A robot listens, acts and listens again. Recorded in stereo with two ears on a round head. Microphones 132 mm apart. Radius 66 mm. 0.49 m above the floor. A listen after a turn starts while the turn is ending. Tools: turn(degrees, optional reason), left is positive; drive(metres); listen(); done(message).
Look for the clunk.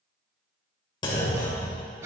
turn(degrees=30, reason="The clunk: about 30° left or 150° left.")
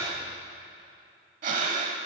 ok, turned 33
listen()
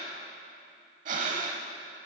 done("I heard a clunk, but can't make it out now. It was about straight ahead or 115° left.")